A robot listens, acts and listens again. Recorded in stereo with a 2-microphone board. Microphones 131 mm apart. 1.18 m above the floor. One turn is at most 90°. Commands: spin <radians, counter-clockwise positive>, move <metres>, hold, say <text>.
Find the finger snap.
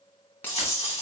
spin 0.52
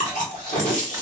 hold
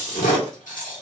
hold
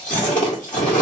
say I heard a finger snap, but can't make it out now. It was about 15° right or 135° left.